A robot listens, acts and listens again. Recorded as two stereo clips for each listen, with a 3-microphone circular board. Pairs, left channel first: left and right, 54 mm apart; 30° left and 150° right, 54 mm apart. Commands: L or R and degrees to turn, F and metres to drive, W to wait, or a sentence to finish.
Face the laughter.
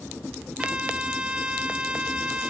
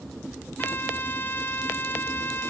W
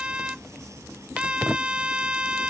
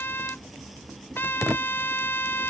W
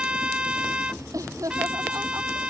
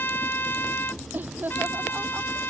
R95
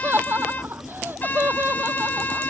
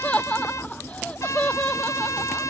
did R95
R40
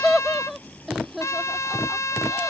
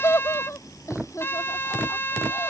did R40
Facing the laughter.